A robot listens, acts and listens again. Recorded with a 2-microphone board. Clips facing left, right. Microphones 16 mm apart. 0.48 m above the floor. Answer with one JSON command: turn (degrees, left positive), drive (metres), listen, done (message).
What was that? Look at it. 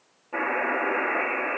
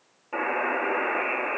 {"turn": -25}
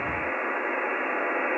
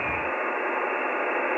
{"turn": -130}
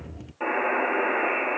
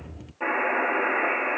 {"turn": 15}
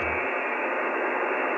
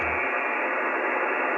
{"done": "Facing the buzzer, over 4 m away."}